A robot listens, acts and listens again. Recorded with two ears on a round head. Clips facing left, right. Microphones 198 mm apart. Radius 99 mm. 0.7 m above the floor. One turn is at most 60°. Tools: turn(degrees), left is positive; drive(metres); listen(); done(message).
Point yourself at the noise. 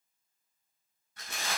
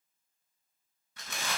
turn(degrees=-55)
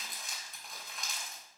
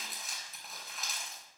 done("Found it: crumpling, straight ahead, over 4 m away.")